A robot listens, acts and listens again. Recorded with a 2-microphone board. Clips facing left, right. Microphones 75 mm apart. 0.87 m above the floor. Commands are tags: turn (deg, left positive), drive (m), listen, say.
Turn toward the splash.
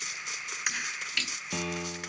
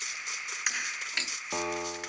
<turn deg="-30"/>
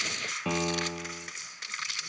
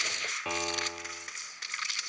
<listen/>
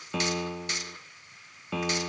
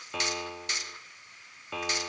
<say>I heard a splash, but can't make it out now. It was about straight ahead or 120° right.</say>